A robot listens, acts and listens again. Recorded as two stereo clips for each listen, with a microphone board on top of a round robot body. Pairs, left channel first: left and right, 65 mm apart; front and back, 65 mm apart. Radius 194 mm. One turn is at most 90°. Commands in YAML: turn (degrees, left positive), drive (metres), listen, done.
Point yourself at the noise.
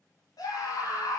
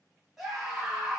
turn: 90
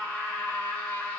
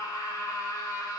turn: 15
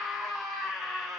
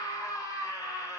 done: "Found it: a scream, straight ahead."